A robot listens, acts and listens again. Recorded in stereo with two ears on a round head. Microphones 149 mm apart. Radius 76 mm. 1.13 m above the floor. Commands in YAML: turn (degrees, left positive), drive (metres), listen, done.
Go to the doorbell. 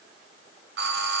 turn: -75
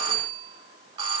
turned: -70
turn: -30
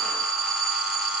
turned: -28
drive: 1.0
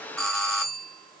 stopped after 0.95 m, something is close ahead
done: "I am next to the doorbell."